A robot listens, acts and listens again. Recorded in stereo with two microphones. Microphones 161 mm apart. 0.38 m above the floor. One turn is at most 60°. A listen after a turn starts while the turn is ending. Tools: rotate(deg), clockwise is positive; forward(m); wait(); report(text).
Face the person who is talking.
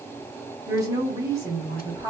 rotate(20)
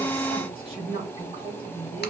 rotate(60)
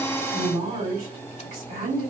rotate(60)
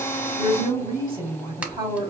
rotate(35)
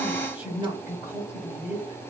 rotate(10)
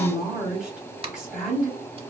report("Facing the woman speaking, 1 to 2 m away.")